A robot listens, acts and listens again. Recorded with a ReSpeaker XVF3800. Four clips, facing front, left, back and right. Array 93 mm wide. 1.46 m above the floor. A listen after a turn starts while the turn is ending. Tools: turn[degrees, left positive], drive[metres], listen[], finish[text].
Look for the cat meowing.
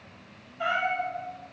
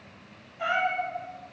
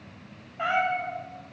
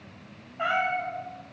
Thought: The cat meowing: 140° right.
Action: turn[-140]
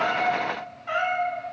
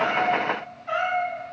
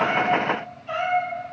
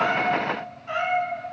Action: finish[Facing the cat meowing.]